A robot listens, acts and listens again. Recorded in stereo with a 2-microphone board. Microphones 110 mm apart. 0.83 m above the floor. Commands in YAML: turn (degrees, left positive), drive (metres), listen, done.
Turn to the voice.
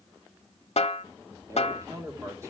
turn: -25
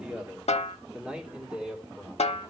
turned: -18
turn: -30
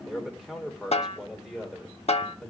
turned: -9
turn: 30
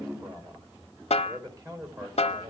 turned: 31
turn: -35
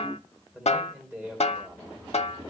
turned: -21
turn: -15
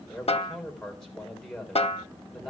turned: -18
done: "Facing the man speaking."